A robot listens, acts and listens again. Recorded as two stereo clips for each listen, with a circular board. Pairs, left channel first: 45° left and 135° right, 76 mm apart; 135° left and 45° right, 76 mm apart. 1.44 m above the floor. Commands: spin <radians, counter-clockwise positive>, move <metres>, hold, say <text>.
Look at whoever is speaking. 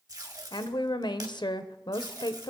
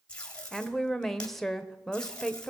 spin 0.87
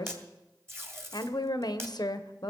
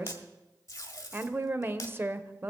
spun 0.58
spin 0.26
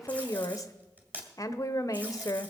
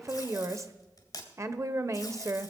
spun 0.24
say Facing the woman speaking, under 1 m away.